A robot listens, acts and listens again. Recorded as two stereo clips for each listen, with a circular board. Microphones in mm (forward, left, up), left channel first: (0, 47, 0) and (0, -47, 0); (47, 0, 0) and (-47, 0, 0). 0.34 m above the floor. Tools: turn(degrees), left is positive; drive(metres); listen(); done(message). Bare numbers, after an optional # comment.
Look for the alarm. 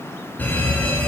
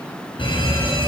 # The alarm: 20° left.
turn(20)
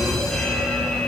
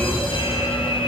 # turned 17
done("Facing the alarm.")